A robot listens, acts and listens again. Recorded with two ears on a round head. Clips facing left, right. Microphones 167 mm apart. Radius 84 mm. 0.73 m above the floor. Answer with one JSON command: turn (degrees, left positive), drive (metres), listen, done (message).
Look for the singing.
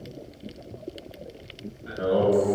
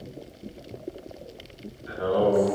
{"turn": 70}
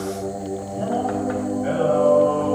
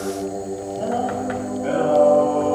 {"turn": 15}
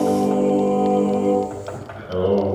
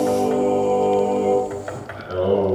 {"turn": 10}
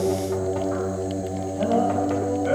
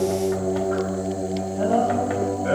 {"done": "Facing the singing."}